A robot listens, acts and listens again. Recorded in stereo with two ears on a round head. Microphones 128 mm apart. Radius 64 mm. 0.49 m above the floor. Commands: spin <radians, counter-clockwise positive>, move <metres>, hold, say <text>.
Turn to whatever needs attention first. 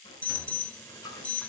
spin 0.52
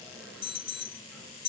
spin 2.44
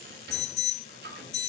spin 0.96
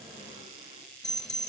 say Found it: an alarm, straight ahead, 1 to 2 m away.